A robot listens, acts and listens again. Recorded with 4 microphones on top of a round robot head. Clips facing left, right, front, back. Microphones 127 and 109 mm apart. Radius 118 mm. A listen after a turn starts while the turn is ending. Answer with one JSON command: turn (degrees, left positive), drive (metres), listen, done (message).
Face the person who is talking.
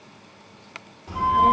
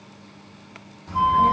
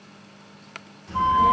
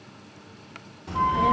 {"turn": 170}
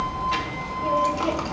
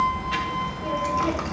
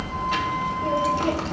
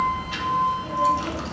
{"turn": 25}
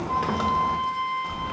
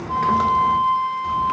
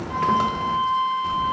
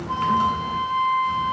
{"done": "Facing the child speaking, under 1 m away."}